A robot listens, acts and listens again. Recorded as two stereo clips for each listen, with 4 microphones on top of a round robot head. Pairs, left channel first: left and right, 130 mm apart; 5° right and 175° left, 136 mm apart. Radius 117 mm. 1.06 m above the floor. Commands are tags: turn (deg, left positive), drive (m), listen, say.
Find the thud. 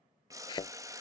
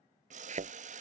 <turn deg="145"/>
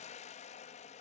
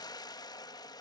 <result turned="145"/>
<say>I heard a thud from this way, but can't make it out now.</say>